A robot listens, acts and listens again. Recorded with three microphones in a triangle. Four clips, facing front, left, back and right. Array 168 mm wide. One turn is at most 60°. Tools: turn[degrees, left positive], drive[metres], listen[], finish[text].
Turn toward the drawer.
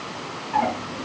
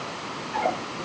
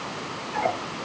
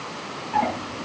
Thought: The drawer: 45° right.
Action: turn[-45]
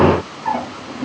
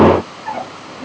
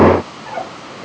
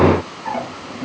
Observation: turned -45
Thought: The drawer is now 10° right.
Action: turn[-10]
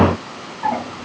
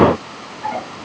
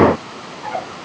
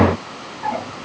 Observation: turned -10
Action: listen[]
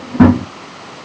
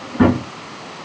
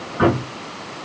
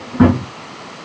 Action: finish[Facing the drawer, over 4 m away.]